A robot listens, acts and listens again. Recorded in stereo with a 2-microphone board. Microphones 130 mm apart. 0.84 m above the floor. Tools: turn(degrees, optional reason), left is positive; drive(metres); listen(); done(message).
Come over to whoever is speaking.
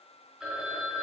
listen()
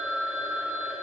listen()
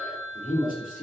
turn(degrees=75, reason="The man speaking: about 75° left or 105° left.")
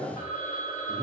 turn(degrees=15, reason="So it is at 15° left.")
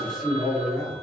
drive(metres=1.0)
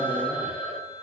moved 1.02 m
listen()
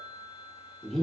drive(metres=1.0)
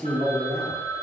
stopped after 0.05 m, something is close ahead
turn(degrees=10, reason="The man speaking is now 10° left.")
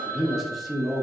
done("I am next to the man speaking.")